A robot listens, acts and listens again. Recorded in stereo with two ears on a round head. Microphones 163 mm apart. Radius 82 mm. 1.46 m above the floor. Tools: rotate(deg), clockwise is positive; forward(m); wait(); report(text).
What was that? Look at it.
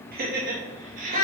rotate(45)
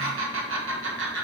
rotate(110)
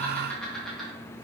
report("Facing the laughter.")